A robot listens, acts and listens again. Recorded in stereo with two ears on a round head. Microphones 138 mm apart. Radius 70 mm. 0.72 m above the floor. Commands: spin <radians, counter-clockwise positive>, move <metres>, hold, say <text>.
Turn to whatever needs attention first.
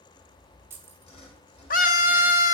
spin 0.96
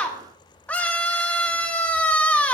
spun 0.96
spin 0.17
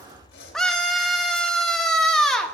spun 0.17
say Facing the scream, under 1 m away.